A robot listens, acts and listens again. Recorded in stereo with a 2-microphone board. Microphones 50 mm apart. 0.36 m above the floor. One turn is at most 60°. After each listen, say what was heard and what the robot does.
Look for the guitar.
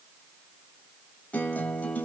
The guitar: about 30° left or 150° left. Turn 30° left.
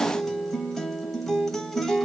Found it: a guitar, straight ahead.